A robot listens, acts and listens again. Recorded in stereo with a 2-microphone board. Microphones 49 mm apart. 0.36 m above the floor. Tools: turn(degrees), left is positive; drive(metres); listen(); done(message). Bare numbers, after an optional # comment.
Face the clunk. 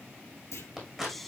# The clunk: about 70° left or 110° left.
turn(70)
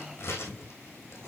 listen()
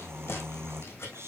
done("I heard a clunk, but can't make it out now. It was about straight ahead or 40° left.")